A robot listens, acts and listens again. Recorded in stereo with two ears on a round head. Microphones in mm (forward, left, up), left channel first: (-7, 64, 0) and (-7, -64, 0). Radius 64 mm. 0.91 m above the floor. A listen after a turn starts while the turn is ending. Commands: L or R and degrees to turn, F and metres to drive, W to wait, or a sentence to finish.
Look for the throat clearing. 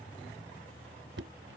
W
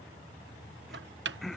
L30
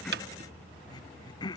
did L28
L150
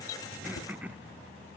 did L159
R10
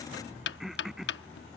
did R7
Found it: throat clearing, straight ahead.